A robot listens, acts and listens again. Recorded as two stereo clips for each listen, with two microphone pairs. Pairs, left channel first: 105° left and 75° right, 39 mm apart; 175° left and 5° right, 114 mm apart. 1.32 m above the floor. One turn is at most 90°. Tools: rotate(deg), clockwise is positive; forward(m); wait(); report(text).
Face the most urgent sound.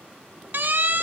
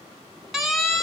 rotate(90)
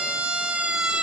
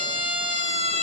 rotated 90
rotate(10)
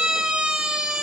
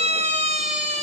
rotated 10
report("Facing the siren, 2 to 4 m away.")